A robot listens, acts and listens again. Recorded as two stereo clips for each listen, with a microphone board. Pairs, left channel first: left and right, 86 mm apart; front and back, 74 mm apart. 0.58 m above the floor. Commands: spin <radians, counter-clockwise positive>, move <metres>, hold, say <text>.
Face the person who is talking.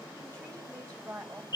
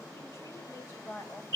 spin -0.70
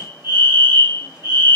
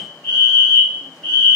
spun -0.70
hold
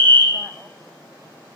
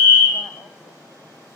hold
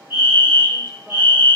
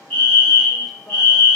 say I heard a woman speaking from this way, but can't make it out now.